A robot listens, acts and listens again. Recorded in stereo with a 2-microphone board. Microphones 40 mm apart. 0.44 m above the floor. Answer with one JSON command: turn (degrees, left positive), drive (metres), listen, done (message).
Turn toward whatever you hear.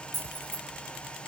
{"turn": 90}
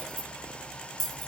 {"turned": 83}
{"done": "Found it: keys jangling, straight ahead, over 4 m away."}